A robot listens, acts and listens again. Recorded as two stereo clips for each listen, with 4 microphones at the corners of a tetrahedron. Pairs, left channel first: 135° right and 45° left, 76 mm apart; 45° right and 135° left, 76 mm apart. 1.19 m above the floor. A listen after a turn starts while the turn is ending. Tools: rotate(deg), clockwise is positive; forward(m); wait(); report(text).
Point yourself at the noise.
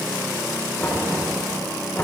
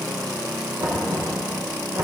rotate(-160)
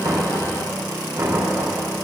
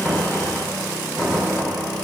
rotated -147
rotate(-15)
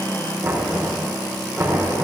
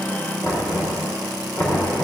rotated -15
report("Facing the knocking.")